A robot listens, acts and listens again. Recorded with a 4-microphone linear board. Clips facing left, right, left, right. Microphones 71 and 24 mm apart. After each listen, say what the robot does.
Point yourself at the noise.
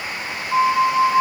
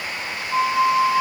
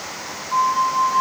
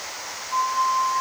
Turn 35° left.
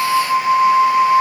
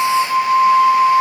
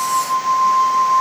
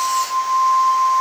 Facing the flute, 1 to 2 m away.